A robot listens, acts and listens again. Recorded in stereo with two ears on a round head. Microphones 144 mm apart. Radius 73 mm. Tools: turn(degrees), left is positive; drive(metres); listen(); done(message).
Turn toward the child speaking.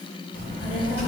turn(degrees=50)
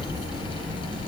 done("Facing the child speaking, 2 to 4 m away.")